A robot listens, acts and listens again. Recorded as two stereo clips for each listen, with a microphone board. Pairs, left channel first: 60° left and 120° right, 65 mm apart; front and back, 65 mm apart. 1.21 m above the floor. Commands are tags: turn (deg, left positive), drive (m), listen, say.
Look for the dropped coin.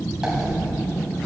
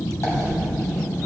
<turn deg="-40"/>
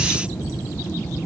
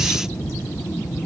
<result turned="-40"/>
<say>Facing where the dropped coin came from. I can't hear it now.</say>